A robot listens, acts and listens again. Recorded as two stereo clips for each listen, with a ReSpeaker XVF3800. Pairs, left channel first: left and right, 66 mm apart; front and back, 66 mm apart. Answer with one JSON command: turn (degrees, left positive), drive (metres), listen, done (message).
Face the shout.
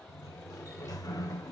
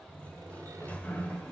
{"listen": true}
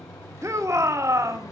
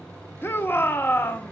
{"turn": -55}
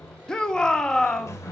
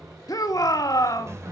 {"turn": 10}
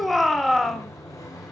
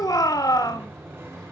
{"done": "Facing the shout."}